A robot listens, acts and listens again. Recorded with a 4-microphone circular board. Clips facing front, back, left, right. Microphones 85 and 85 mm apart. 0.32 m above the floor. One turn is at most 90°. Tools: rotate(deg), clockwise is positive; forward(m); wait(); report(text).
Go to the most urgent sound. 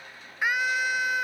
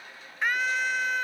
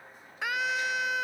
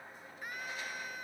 rotate(-80)
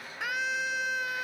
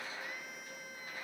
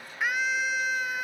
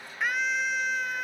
forward(1.0)
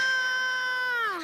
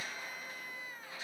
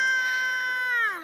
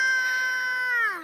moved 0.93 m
forward(1.0)
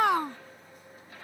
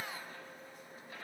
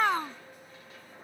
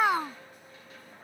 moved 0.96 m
rotate(10)
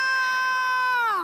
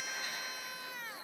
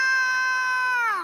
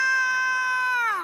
forward(1.0)
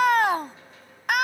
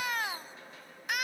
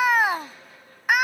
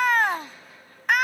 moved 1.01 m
rotate(-10)
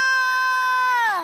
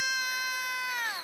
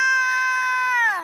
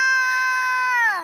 forward(1.0)
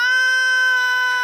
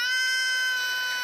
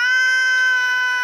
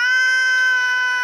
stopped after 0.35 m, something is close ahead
report("Arrived at the scream, straight ahead.")